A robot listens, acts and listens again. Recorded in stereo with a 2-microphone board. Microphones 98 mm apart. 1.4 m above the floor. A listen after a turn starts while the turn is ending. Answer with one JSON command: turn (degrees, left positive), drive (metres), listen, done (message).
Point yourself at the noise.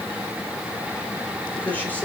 {"turn": 15}
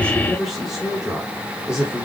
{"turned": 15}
{"turn": -30}
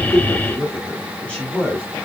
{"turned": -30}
{"turn": 10}
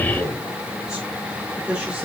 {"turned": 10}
{"turn": -10}
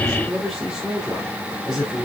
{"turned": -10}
{"done": "Found it: a man speaking, straight ahead."}